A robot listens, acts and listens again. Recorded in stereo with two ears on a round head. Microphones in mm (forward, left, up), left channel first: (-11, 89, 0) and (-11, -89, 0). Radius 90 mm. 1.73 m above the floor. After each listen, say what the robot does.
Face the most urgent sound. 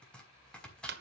Keep listening.
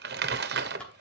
Keep listening.
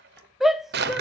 Turn 30° left.
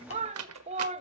Turn 35° right.
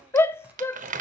Turn 10° left.
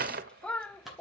Facing the shout, under 1 m away.